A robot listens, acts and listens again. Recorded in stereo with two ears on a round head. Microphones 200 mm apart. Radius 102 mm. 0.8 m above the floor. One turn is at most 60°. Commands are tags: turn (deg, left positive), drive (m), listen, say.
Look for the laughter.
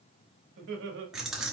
<turn deg="-50"/>
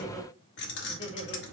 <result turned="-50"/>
<turn deg="25"/>
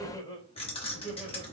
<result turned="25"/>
<turn deg="30"/>
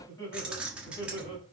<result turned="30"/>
<turn deg="25"/>
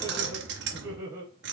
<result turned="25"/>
<turn deg="-15"/>
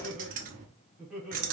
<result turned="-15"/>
<say>Found it: laughter, straight ahead, 2 to 4 m away.</say>